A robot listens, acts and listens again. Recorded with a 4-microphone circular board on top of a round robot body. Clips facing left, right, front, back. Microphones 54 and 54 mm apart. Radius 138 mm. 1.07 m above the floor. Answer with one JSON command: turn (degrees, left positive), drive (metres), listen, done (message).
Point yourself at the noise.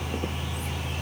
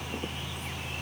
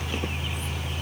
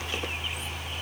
{"listen": true}
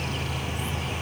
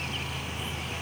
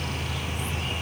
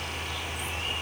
{"listen": true}
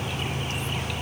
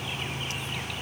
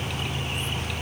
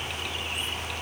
{"done": "I can't make out anything."}